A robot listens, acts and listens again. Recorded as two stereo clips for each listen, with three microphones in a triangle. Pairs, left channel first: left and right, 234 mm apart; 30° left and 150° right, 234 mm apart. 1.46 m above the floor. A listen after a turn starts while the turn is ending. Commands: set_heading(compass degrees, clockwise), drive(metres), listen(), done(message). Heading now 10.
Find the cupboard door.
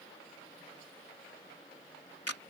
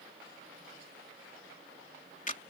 listen()
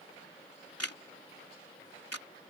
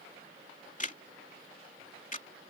listen()
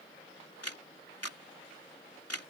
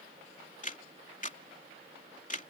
done("I can't make out a cupboard door, only a camera shutter.")